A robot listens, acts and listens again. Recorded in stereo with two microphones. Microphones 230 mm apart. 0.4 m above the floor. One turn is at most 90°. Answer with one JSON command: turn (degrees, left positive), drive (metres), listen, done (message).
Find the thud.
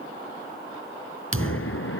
{"turn": -90}
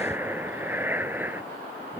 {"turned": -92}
{"done": "I heard a thud from this way, but can't make it out now."}